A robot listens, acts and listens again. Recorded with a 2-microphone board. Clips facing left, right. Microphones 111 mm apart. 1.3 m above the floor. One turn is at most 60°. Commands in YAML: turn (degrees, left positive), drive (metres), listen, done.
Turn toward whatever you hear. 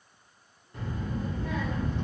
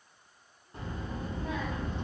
turn: -20
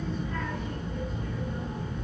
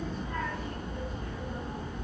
turn: -60
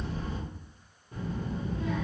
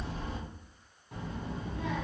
turn: -60
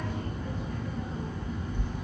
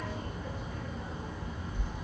turn: -15
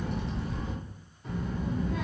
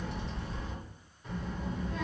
done: "Facing the child speaking."